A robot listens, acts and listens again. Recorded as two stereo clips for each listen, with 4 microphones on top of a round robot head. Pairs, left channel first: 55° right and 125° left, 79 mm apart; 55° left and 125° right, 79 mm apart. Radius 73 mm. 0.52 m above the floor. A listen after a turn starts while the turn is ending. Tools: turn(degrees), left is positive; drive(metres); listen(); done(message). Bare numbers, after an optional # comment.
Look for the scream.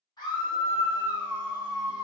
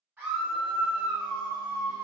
# The scream: 50° right.
turn(-50)
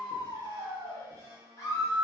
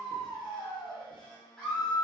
# The scream is now 15° right.
turn(-15)
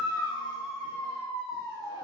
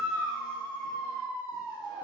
done("Found it: a scream, straight ahead, 1 to 2 m away.")